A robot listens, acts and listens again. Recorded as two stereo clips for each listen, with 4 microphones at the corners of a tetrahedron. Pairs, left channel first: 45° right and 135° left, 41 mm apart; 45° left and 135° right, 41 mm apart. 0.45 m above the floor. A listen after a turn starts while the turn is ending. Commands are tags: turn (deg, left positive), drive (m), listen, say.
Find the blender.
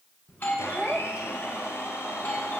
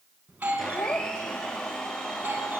<turn deg="-35"/>
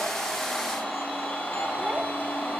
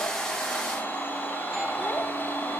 <say>Facing the blender, over 4 m away.</say>